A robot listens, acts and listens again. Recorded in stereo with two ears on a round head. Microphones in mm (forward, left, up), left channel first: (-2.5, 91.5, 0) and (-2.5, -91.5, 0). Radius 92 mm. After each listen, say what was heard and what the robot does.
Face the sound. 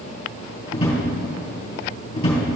The drawer: about 20° left or 160° left. Turn 20° left.
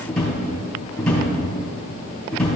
Facing the drawer, 2 to 4 m away.